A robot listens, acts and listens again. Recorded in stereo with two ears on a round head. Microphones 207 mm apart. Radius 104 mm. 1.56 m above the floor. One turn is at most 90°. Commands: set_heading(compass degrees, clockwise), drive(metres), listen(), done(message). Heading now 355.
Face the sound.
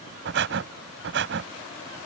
set_heading(55)
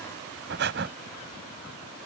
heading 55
set_heading(110)
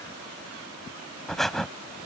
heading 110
done("Found it: breathing, straight ahead.")